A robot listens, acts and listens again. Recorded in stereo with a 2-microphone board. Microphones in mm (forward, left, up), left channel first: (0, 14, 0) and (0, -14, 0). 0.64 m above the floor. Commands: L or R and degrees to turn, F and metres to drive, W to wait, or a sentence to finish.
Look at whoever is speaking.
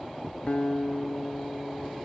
W
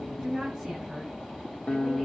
R20
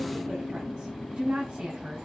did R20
R140
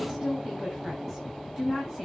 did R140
Facing the woman speaking, over 4 m away.